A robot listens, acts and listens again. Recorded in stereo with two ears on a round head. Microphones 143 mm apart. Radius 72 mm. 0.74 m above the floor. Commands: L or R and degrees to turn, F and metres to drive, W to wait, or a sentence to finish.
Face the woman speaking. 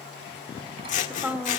R30
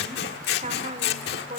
R130
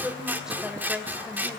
Found it: a woman speaking, straight ahead, 2 to 4 m away.